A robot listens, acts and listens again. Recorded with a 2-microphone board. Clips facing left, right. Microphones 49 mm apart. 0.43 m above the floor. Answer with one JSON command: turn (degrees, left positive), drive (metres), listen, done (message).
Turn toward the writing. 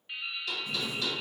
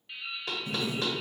{"turn": -60}
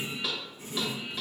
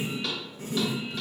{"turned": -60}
{"turn": -50}
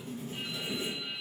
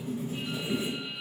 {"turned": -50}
{"turn": -10}
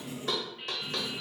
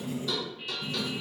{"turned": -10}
{"done": "Facing the writing."}